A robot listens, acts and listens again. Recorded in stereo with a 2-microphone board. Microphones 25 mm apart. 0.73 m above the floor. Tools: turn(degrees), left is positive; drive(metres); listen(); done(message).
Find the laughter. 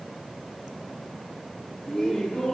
turn(degrees=15)
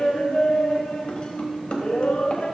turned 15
turn(degrees=40)
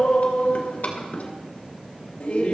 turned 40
turn(degrees=105)
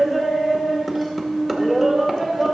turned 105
turn(degrees=10)
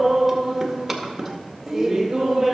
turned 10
done("Facing the laughter, 2 to 4 m away.")